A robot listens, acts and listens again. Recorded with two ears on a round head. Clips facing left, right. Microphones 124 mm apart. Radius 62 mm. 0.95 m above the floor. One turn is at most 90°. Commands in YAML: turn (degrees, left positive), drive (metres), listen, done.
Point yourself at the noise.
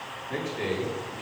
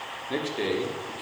turn: -35
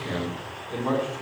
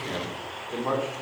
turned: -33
turn: -10
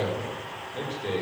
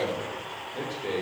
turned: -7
done: "Facing the man speaking."